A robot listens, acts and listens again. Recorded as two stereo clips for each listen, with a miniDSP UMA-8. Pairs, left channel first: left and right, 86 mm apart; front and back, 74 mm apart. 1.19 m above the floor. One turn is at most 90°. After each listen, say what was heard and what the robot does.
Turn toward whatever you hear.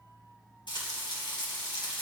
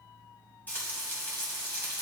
The frying: 65° left. Turn 65° left.
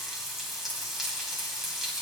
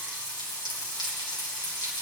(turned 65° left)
Facing the frying.